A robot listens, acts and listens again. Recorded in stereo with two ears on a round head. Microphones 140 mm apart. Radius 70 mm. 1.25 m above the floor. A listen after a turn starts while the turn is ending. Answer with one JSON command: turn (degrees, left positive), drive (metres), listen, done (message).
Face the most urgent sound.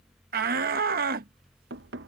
{"turn": -60}
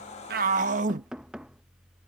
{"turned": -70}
{"turn": -50}
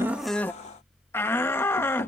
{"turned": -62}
{"turn": 15}
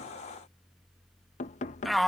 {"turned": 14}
{"done": "Found it: a shout, straight ahead."}